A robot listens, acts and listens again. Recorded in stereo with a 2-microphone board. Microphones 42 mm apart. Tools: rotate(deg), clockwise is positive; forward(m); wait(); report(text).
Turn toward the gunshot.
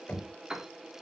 wait()
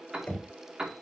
wait()
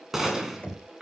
rotate(30)
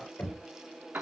wait()
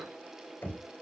report("I heard a gunshot, but can't make it out now. It was about 20° left or 140° right.")